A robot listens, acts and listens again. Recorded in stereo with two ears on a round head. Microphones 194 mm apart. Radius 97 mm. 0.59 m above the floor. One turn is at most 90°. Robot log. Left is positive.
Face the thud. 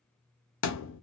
note: The thud: about 60° left or 120° left.
cmd yaw +60
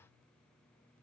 cmd idle
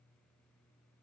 end: I heard a thud, but can't make it out now. It was about straight ahead or 60° left.